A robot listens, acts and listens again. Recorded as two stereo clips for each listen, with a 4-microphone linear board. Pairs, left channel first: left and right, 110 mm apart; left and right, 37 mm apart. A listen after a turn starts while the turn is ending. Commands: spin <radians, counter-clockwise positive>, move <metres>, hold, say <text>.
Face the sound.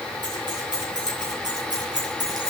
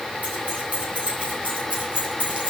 spin -0.70
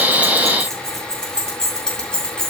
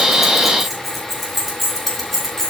spin 0.17
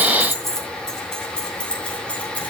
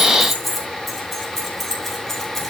spin 0.26
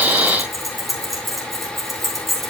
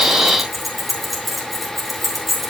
say Facing the keys jangling.